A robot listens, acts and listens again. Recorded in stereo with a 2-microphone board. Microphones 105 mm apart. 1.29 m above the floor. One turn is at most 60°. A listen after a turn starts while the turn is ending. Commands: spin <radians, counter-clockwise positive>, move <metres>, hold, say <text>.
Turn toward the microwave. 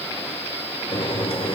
spin 1.05
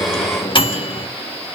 spin 0.96
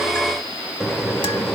say Found it: a microwave, straight ahead, 1 to 2 m away.